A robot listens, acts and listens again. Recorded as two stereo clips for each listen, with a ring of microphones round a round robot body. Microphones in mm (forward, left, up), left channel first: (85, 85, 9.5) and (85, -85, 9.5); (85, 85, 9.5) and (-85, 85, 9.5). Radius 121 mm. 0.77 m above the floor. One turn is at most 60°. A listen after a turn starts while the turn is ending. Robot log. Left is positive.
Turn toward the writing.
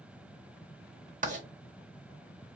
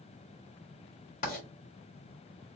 note: The writing: 50° right.
cmd yaw -50
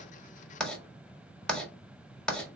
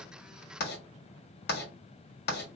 end: Facing the writing.